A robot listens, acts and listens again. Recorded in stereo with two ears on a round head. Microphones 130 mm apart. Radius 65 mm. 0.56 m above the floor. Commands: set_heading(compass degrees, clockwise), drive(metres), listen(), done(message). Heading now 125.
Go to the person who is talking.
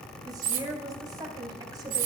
set_heading(150)
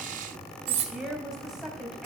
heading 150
drive(1.0)
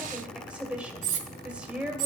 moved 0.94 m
set_heading(160)
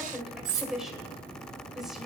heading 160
drive(1.0)
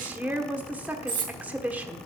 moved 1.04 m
set_heading(175)
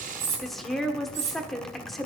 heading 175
drive(1.0)
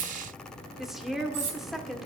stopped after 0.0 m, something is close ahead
done("Arrived at the woman speaking, straight ahead.")